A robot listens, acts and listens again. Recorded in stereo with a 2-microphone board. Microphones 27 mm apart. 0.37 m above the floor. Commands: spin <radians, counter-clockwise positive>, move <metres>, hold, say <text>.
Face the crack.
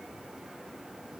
hold
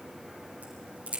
spin -1.13
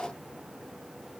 hold
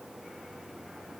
say I heard a crack, but can't make it out now. It was about straight ahead or 50° right.